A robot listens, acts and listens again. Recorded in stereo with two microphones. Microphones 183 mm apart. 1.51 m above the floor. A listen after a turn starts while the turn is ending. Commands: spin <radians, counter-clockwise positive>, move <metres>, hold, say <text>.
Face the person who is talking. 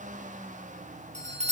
hold
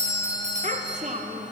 spin -0.79
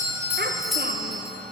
hold
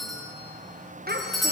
spin -1.48
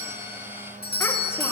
hold
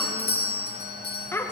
spin 0.26
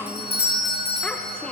say Found it: a child speaking, straight ahead.